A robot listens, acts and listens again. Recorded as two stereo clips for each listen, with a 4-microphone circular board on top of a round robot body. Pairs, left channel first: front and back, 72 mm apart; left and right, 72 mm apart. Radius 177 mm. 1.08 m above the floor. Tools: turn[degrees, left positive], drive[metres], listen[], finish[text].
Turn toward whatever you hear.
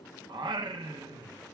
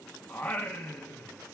Thought: The singing: 160° left.
Action: turn[160]
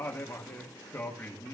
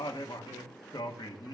Thought: The singing is now 70° left.
Action: turn[70]
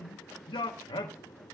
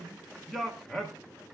Action: finish[Facing the singing.]